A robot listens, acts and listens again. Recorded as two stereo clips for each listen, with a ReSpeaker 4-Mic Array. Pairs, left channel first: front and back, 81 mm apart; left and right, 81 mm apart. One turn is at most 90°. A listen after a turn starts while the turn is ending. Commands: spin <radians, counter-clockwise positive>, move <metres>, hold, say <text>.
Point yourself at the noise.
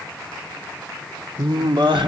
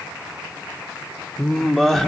spin 1.57
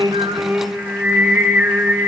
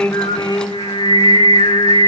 spin 1.57
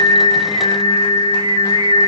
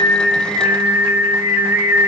spin -0.35
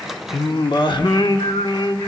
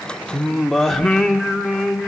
say Facing the singing, 1 to 2 m away.